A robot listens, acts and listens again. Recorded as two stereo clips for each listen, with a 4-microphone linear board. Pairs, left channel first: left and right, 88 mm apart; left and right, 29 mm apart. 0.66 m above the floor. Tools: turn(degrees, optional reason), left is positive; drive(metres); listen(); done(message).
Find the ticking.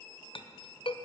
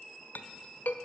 listen()
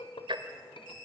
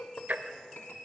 turn(degrees=-65, reason="The ticking: about 65° right or 115° right.")
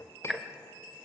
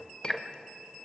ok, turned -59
done("Found it: ticking, straight ahead, 1 to 2 m away.")